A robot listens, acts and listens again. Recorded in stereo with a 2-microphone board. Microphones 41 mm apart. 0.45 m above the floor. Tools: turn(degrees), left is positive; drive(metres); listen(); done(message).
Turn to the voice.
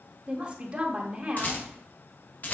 turn(degrees=-30)
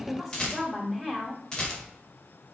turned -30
done("Found it: a woman speaking, straight ahead.")